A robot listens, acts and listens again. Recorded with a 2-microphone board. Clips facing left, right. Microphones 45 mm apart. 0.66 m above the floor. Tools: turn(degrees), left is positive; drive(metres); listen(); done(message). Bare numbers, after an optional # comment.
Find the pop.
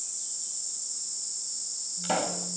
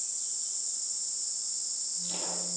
# The pop: about 70° left or 110° left.
turn(70)
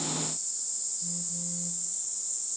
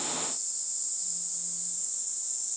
listen()
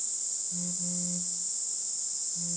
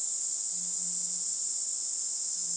done("I heard a pop, but can't make it out now. It was about straight ahead or 40° left.")